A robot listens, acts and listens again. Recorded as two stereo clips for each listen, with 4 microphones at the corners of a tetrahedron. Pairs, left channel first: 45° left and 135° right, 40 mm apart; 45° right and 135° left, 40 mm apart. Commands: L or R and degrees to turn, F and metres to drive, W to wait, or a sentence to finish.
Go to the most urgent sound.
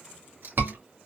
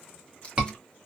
R155
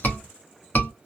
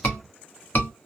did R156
F1.0
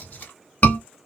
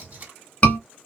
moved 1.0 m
F1.0
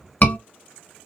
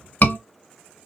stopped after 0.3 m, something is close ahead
Arrived at the scream, straight ahead.